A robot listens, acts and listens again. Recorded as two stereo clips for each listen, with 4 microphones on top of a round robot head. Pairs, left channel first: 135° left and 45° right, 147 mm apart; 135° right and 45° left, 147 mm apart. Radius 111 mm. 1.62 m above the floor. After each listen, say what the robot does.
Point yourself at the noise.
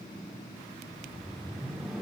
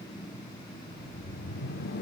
Turn 135° right.
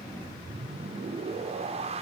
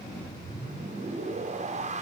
Found it: a whoosh, straight ahead.